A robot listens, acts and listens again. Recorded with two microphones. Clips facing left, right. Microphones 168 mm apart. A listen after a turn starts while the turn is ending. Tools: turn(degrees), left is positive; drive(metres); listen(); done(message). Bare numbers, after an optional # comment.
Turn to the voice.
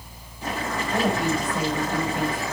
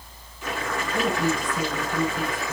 # The woman speaking: about 75° left or 105° left.
turn(75)
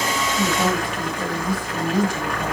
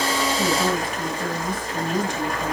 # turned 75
# So it is at 10° left.
turn(10)
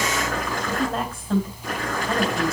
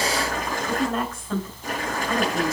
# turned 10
done("Facing the woman speaking.")